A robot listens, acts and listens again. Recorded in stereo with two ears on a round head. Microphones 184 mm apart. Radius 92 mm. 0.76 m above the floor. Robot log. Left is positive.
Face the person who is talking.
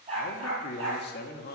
note: The man speaking: about 45° left or 135° left.
cmd yaw +45
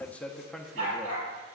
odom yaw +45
end: Facing the man speaking.